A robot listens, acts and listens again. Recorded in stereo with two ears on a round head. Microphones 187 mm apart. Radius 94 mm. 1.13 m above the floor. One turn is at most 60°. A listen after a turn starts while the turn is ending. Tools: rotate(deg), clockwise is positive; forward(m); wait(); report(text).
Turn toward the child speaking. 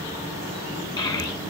rotate(-20)
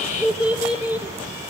rotate(10)
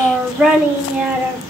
rotate(10)
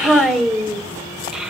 report("Facing the child speaking, 2 to 4 m away.")